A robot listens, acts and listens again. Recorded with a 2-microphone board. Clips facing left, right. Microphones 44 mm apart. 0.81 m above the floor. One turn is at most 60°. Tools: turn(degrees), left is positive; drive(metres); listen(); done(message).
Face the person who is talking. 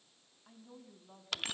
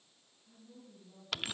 turn(degrees=60)
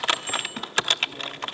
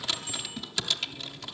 listen()
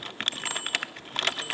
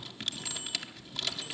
listen()
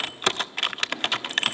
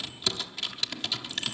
done("I heard a woman speaking, but can't make it out now. It was about 5° left or 55° left.")